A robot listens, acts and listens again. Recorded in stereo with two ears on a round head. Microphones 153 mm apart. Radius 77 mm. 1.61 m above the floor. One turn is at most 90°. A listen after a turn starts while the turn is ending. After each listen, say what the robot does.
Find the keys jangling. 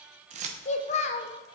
Turn 40° right.
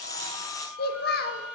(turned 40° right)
Keep listening.
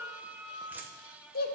Keep listening.
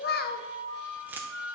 Turn 15° right.
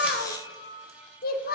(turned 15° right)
Keep listening.
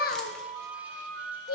Keep listening.
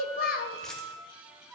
I heard keys jangling from this way, but can't make it out now.